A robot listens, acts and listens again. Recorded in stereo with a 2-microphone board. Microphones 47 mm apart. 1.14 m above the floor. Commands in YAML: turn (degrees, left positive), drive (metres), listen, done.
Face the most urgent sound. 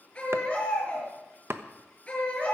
turn: 25
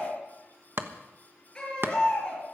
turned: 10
turn: 30
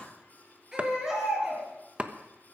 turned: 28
turn: -15
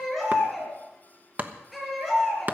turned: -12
done: "Facing the baby crying."